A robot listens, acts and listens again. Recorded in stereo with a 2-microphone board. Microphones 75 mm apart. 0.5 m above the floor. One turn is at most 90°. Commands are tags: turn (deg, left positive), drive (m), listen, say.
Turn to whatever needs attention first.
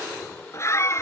<turn deg="40"/>
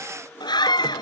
<turn deg="90"/>
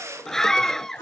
<say>Found it: a scream, straight ahead.</say>